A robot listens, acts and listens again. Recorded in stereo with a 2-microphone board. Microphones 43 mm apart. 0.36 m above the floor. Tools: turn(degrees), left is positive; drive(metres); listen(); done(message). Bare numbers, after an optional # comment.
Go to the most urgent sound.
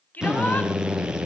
# The shout: about 40° left or 140° left.
turn(40)
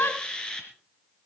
# So it is at 95° left.
turn(95)
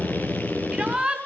# The shout is now 20° right.
turn(-20)
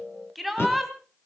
drive(1.0)
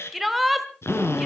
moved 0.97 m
drive(1.0)
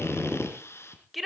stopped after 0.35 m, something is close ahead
done("Arrived at the shout, straight ahead.")